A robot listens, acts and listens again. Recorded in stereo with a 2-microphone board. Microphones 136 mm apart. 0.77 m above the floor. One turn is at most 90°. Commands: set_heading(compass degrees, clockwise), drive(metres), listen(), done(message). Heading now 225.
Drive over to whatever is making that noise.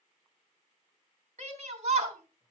set_heading(280)
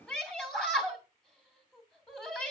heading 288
drive(1.0)
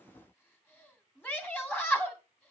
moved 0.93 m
set_heading(273)
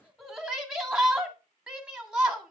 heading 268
drive(1.0)
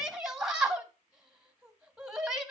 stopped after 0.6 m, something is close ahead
done("Arrived at the shout, straight ahead.")